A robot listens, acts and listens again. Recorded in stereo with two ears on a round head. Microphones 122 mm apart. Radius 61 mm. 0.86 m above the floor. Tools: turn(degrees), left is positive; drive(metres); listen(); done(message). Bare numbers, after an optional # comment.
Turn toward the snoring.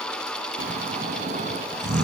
# The snoring: about 60° right or 120° right.
turn(-60)
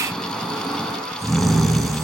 done("Facing the snoring, 2 to 4 m away.")